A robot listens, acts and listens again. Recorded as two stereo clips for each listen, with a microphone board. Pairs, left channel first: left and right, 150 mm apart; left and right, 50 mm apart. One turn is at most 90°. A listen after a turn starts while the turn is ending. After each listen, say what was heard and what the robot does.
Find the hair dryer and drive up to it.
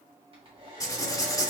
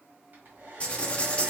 The hair dryer: about 40° right or 140° right. Turn 40° right.
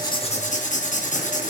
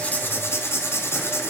Keep listening.
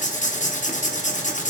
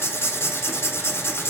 Keep listening.
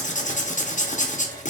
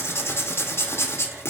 I heard a hair dryer, but can't make it out now. It was about straight ahead or 100° right. I did not reach it.